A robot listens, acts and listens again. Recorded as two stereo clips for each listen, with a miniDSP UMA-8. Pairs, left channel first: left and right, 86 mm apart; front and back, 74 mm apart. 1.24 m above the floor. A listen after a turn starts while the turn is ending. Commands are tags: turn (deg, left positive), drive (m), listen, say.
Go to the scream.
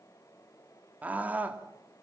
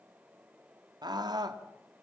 <turn deg="-160"/>
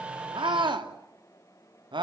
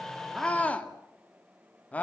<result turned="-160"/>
<turn deg="-70"/>
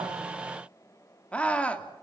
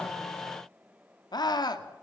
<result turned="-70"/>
<turn deg="15"/>
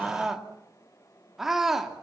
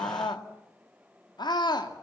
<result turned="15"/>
<drive m="1.0"/>
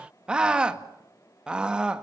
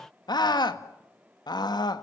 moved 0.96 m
<turn deg="-10"/>
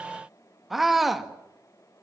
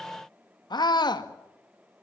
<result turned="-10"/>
<drive m="1.0"/>
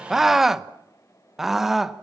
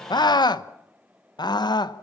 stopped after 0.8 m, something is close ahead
<say>I am next to the scream.</say>